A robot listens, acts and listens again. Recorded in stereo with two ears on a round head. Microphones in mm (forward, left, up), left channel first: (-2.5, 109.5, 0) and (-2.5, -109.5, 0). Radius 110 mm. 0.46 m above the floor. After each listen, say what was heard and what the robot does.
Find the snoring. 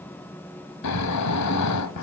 Turn 90° left.
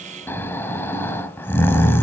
So it is at 10° left. Turn 10° left.
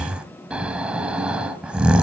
Found it: snoring, straight ahead.